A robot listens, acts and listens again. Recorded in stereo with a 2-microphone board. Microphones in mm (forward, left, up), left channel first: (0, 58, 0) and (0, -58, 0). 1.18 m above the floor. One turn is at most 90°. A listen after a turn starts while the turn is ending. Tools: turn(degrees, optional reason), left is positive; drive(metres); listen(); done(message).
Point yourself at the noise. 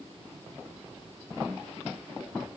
listen()
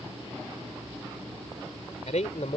turn(degrees=90)
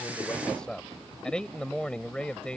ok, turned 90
turn(degrees=10, reason="So it is at 10° left.")
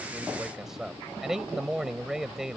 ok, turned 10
done("Found it: a man speaking, straight ahead.")